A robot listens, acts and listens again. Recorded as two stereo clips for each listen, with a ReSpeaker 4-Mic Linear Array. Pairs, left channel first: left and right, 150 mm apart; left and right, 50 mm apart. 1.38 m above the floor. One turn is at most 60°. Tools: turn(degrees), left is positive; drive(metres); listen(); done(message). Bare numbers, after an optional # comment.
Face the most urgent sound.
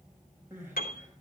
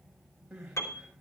# The crying: about 15° right or 165° right.
turn(-15)
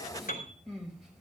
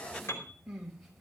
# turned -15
done("Facing the crying, over 4 m away.")